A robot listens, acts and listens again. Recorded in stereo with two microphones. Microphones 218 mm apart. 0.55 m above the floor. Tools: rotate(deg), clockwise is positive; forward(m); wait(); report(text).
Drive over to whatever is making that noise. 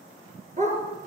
rotate(35)
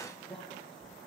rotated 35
wait()
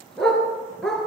forward(1.0)
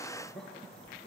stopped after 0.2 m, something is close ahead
wait()
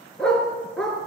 report("Something is in my way. I am facing the dog barking but have not reached it.")